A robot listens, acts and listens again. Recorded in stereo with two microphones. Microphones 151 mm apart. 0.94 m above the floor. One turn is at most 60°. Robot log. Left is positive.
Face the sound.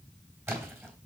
cmd yaw -30
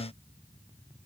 cmd idle
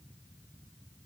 end: I heard a splash, but can't make it out now. It was about 15° left or 135° right.